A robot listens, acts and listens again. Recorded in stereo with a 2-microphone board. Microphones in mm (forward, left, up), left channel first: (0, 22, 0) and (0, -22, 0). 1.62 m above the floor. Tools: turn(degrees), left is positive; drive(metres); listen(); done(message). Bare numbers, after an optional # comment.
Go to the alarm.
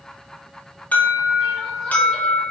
# The alarm: about 35° left or 145° left.
turn(35)
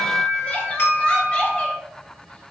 # So it is at 110° left.
turn(110)
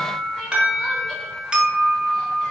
# The alarm is now 20° right.
turn(-20)
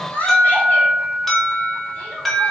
drive(1.0)
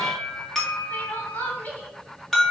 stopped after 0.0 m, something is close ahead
# The alarm is now 10° left.
turn(10)
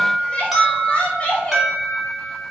done("Something is in my way. I am facing the alarm but have not reached it.")